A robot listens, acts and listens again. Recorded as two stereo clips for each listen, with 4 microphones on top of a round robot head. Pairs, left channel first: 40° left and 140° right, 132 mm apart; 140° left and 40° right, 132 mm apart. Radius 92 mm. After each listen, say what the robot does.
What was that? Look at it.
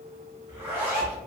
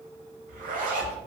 Turn 65° right.
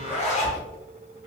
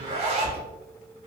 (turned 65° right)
Facing the zipper.